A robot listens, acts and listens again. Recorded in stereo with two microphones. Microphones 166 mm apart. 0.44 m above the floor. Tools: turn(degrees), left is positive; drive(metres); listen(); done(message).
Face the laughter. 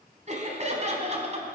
turn(degrees=-40)
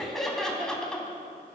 done("Facing the laughter, 2 to 4 m away.")